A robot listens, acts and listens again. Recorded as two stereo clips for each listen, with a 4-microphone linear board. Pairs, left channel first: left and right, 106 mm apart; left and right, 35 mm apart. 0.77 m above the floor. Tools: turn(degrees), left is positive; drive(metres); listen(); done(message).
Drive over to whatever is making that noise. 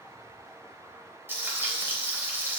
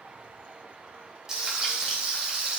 turn(degrees=-20)
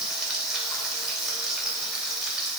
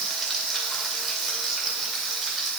drive(metres=1.0)
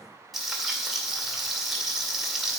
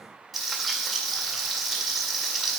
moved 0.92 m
drive(metres=1.0)
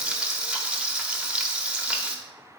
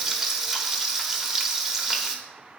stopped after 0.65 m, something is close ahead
turn(degrees=-10)
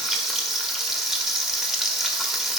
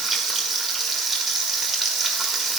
done("Arrived at the frying, straight ahead.")